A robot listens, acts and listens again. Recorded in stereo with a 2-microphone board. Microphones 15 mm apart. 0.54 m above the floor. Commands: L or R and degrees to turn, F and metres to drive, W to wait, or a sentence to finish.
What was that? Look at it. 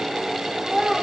R75
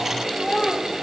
L10
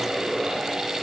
W
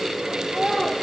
Found it: a child speaking, straight ahead.